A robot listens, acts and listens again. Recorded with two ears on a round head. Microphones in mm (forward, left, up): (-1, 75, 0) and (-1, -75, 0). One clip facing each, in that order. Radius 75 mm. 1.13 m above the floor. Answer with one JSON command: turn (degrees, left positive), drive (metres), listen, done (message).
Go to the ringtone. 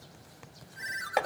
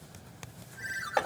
{"turn": 65}
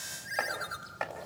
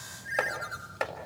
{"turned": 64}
{"turn": 50}
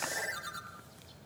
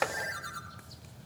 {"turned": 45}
{"drive": 1.0}
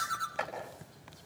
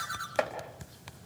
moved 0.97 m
{"drive": 1.0}
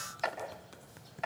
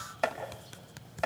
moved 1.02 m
{"listen": true}
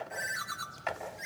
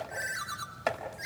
{"drive": 1.0}
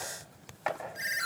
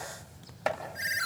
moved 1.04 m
{"drive": 1.0}
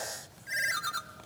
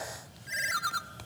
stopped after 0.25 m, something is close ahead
{"done": "Arrived at the ringtone, straight ahead."}